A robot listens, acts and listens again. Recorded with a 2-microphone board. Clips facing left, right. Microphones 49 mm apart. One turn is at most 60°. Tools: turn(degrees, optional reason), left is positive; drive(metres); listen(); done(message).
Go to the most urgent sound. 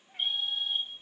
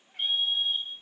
turn(degrees=-50, reason="The fire alarm: about 50° right or 130° right.")
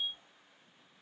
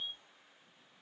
turn(degrees=-15, reason="So it is at 15° right.")
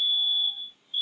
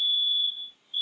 drive(metres=1.0)
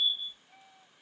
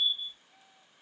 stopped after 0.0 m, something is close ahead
done("Blocked. The fire alarm is further on, straight ahead.")